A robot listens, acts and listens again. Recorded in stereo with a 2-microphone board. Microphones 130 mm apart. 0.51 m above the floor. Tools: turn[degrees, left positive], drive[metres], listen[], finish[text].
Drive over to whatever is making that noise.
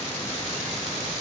Action: listen[]
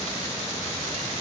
Action: listen[]
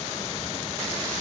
Action: finish[I can't make out anything to turn to.]